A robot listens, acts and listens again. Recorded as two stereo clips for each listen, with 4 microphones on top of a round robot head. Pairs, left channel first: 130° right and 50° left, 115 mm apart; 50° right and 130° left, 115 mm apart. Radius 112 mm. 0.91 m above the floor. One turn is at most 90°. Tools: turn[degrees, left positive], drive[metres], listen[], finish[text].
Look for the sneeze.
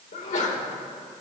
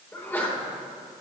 Thought: The sneeze: 120° right.
Action: turn[-90]
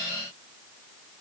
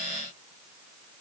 Thought: Nothing new. It was at 30° right.
Action: turn[-30]
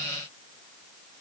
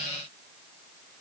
Action: finish[I heard a sneeze from this way, but can't make it out now.]